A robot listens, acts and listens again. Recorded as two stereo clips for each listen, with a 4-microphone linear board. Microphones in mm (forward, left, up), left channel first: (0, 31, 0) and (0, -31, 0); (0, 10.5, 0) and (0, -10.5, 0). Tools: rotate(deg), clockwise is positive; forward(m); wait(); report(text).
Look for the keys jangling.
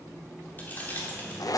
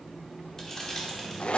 rotate(-30)
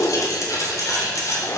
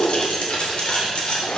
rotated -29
rotate(-115)
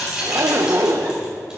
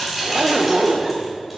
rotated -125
rotate(15)
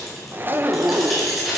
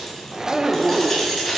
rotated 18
report("Found it: keys jangling, straight ahead.")